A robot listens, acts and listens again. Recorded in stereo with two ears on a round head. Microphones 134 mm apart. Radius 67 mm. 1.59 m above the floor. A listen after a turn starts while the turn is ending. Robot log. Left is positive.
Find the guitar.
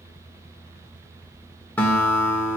cmd yaw +30
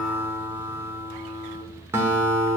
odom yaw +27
note: So it is at 15° right.
cmd yaw -15
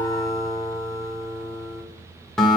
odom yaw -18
end: Found it: a guitar, straight ahead, 1 to 2 m away.